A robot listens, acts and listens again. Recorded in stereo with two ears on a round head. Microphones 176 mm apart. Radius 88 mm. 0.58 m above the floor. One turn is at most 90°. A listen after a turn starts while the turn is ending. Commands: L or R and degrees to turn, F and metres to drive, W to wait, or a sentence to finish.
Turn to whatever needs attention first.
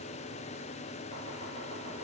W
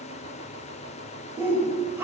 R30
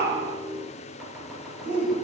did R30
R90
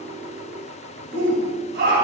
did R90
R55
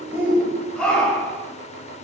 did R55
Found it: a shout, straight ahead.